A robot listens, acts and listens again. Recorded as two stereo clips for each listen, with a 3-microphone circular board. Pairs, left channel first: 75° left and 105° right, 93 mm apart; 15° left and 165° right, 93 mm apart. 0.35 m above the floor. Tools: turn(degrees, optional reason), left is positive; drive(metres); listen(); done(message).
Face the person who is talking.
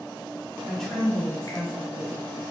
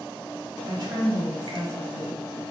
turn(degrees=160, reason="The woman speaking: 160° left.")
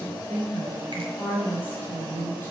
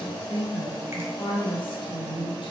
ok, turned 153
done("Facing the woman speaking.")